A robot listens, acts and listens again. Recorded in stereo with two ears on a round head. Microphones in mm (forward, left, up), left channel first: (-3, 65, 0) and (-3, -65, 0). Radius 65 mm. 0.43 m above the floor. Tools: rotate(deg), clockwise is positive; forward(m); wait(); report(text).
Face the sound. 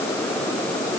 wait()
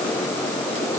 wait()
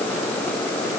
report("I can't make out anything.")